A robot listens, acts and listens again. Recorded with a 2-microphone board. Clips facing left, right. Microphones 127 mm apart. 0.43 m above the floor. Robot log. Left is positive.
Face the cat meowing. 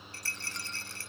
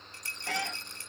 cmd yaw -90
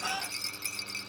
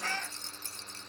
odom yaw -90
note: So it is at 10° left.
cmd yaw +10
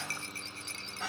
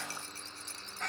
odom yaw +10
end: Facing the cat meowing.